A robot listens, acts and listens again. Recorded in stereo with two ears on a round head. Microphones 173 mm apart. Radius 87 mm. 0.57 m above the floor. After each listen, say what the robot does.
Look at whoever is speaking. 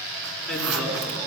Turn 30° left.
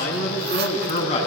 Turn 145° left.
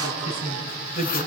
Turn 40° left.
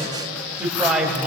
Found it: a woman speaking, straight ahead, 2 to 4 m away.